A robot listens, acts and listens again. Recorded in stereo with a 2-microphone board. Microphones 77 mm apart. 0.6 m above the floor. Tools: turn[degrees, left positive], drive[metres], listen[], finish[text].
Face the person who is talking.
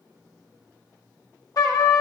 Action: listen[]
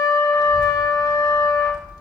Thought: The child speaking: about 65° left or 115° left.
Action: turn[65]
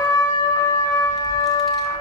Action: finish[Facing the child speaking, 1 to 2 m away.]